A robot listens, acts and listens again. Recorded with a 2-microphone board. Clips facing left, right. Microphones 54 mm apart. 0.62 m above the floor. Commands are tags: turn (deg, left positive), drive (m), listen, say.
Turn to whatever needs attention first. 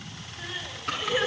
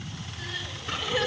<turn deg="25"/>
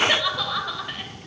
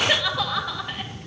<say>Found it: crying, straight ahead, 2 to 4 m away.</say>